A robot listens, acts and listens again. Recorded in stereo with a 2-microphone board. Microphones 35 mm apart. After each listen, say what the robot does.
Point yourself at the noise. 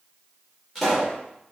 Turn 30° left.
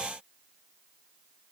Keep listening.
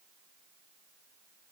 I heard a pop, but can't make it out now. It was about 25° right or 145° left.